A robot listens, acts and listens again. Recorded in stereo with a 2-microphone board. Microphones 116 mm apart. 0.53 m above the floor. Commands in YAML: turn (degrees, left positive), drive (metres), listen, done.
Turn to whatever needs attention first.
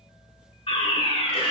turn: 60
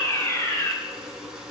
turn: 30
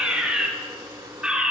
turn: -10
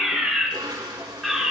done: "Facing the fire alarm, 2 to 4 m away."